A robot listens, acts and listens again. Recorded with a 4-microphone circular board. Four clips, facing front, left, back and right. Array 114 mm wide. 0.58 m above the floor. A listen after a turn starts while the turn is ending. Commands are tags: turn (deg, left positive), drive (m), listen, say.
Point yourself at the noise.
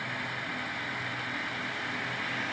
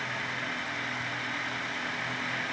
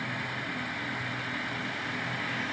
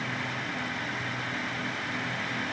<listen/>
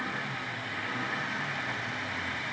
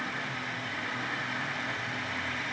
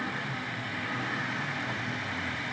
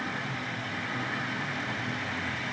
<listen/>
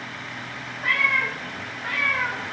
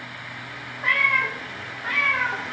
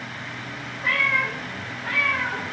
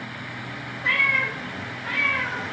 <turn deg="45"/>
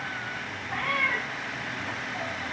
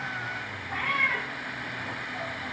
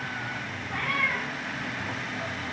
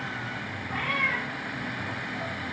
<say>Found it: a cat meowing, straight ahead, 2 to 4 m away.</say>